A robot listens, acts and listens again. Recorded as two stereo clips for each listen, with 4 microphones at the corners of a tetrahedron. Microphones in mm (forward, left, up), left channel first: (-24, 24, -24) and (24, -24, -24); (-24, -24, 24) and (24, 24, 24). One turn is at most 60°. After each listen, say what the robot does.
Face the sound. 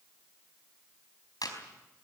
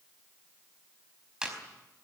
Turn 60° left.
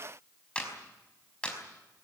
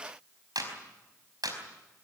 Turn 60° left.
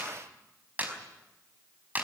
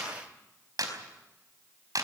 Turn 20° left.
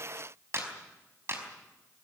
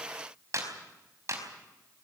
Facing the clap, over 4 m away.